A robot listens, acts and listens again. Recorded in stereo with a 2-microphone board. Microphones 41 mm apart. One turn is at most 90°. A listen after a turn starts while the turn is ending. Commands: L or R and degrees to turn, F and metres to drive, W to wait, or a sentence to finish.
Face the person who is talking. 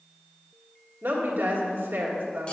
R90
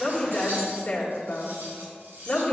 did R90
L20
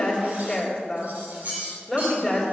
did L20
Found it: a woman speaking, straight ahead, 1 to 2 m away.